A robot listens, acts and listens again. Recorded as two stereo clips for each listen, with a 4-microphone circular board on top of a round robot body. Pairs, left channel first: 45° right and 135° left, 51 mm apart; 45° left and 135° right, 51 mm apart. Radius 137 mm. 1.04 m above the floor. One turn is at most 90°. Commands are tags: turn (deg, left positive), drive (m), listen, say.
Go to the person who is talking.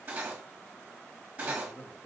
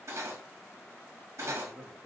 <turn deg="-85"/>
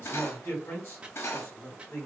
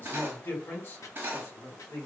<drive m="1.0"/>
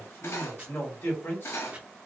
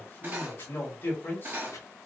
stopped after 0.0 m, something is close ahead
<say>Blocked. The man speaking is further on, straight ahead.</say>